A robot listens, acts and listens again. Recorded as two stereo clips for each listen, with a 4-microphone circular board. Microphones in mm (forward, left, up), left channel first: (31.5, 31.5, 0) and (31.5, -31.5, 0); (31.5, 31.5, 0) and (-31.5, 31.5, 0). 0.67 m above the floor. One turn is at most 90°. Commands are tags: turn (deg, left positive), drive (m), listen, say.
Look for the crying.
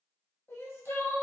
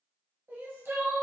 <turn deg="90"/>
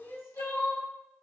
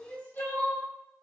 <turn deg="55"/>
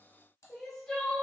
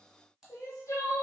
<turn deg="15"/>
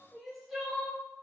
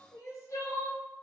<say>Facing the crying, 1 to 2 m away.</say>